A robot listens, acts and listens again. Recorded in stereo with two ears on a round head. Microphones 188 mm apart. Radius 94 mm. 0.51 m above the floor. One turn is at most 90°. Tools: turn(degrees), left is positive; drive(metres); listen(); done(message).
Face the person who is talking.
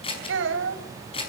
turn(degrees=-70)
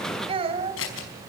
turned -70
turn(degrees=-30)
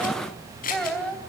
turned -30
done("Found it: a child speaking, straight ahead.")